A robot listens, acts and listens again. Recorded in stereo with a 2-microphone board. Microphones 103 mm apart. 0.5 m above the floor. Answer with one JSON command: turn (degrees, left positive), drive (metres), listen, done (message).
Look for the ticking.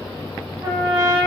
{"listen": true}
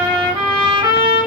{"listen": true}
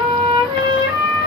{"done": "I can't make out ticking, only a trumpet."}